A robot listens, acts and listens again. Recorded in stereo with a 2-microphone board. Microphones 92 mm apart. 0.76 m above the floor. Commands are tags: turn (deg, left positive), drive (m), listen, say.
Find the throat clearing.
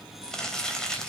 <listen/>
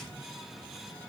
<listen/>
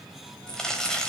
<say>I can't make out throat clearing to turn to.</say>